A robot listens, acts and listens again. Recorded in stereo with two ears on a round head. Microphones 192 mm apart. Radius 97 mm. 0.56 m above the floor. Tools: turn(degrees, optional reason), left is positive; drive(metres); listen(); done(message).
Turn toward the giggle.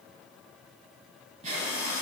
turn(degrees=-35, reason="The giggle: about 35° right or 145° right.")
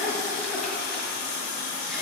done("Facing the giggle, 1 to 2 m away.")